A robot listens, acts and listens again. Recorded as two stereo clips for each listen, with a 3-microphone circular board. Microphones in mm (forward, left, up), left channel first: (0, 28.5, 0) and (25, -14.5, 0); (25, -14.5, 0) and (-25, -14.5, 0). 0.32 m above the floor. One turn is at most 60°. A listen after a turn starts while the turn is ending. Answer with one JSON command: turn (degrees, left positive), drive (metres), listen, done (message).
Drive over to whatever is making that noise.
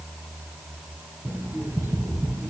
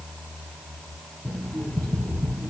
{"turn": -60}
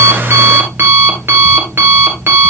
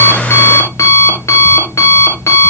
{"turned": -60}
{"turn": -15}
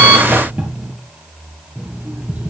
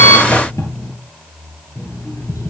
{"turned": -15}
{"drive": 1.0}
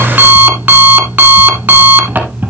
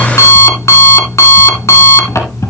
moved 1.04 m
{"drive": 1.0}
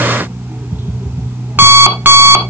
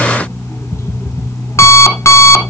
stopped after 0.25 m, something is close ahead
{"turn": -10}
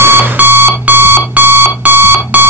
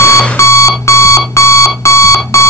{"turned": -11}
{"done": "Arrived at the alarm clock, straight ahead."}